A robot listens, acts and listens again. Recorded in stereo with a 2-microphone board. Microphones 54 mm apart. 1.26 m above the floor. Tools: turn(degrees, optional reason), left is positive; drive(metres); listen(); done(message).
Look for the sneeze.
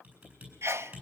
turn(degrees=-55, reason="The sneeze: about 55° right or 125° right.")
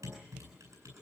listen()
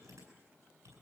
done("I heard a sneeze, but can't make it out now. It was about straight ahead or 70° right.")